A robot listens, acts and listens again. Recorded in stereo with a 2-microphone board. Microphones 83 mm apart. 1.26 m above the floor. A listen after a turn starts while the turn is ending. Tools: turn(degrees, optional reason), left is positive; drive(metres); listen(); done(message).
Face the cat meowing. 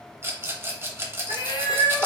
turn(degrees=55, reason="The cat meowing: about 55° left or 125° left.")
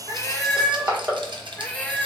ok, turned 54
turn(degrees=20, reason="So it is at 20° left.")
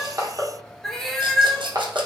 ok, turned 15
done("Facing the cat meowing.")